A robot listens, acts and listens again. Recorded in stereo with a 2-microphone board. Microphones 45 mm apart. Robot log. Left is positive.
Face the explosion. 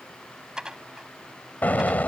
note: The explosion: about 40° left or 140° left.
cmd yaw +40
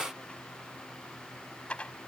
cmd idle
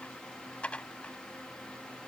end: I heard an explosion, but can't make it out now. It was about straight ahead or 100° left.